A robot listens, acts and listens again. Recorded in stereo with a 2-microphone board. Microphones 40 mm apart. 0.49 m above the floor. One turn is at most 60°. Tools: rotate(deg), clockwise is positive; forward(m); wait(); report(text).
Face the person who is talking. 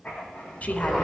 rotate(-40)
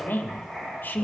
rotate(-60)
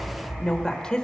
rotate(-25)
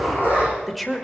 report("Found it: a woman speaking, straight ahead, 1 to 2 m away.")